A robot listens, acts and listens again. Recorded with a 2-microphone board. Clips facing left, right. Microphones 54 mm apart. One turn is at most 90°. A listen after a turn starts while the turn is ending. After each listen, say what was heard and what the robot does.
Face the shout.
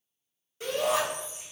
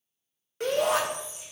The shout: about 65° right or 115° right. Turn 65° right.
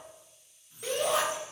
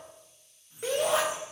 So it is at 50° right. Turn 50° right.
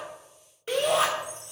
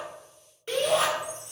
Found it: a shout, straight ahead.